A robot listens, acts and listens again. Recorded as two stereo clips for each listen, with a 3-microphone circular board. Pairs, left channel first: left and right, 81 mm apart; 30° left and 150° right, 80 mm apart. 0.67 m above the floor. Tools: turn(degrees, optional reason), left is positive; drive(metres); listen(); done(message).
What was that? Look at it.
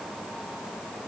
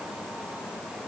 listen()
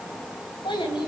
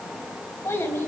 turn(degrees=90, reason="The child speaking: 90° left.")
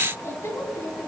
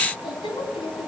turn(degrees=35, reason="The child speaking is now 35° left.")
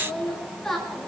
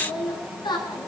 done("Facing the child speaking, over 4 m away.")